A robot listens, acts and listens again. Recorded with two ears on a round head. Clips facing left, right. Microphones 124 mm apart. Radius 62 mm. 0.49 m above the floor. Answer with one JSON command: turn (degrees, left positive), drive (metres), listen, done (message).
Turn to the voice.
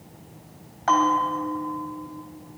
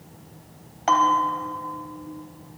{"listen": true}
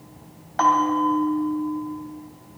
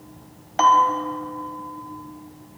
{"listen": true}
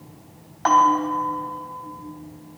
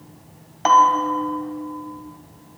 {"done": "I can't make out anyone speaking, only a bell."}